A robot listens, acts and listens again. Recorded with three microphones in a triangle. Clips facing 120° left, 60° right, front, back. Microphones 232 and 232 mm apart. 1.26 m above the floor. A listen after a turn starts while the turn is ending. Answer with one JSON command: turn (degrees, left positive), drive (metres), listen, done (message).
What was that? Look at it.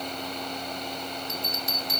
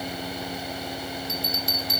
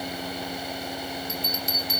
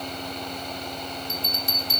{"turn": 45}
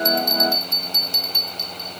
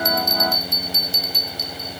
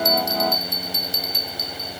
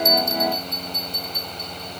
{"done": "Found it: a bell, straight ahead, 1 to 2 m away."}